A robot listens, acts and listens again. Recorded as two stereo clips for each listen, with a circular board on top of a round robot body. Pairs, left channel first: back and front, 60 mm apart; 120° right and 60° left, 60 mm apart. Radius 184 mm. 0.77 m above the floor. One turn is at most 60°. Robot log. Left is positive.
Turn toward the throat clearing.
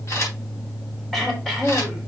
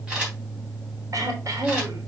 note: The throat clearing: 90° left.
cmd yaw +60
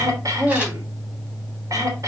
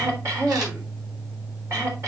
note: The throat clearing is now 20° left.
cmd yaw +20
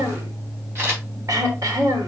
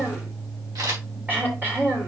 end: Facing the throat clearing, 2 to 4 m away.